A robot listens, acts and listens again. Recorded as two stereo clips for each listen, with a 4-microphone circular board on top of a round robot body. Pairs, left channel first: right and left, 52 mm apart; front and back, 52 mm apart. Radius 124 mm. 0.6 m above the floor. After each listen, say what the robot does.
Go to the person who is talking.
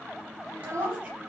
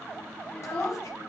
Turn 65° left.
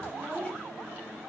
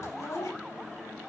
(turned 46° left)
Turn 20° left.
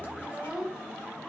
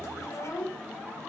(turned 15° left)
Drive 1.0 m forward.
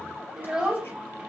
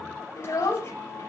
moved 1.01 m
Turn 10° left.
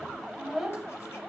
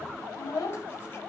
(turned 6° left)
Drive 1.0 m forward.
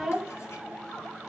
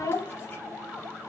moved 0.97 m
Drive 1.0 m forward.
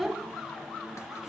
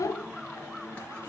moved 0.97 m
Drive 1.0 m forward.
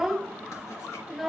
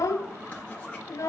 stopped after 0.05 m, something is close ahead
Arrived at the child speaking, straight ahead.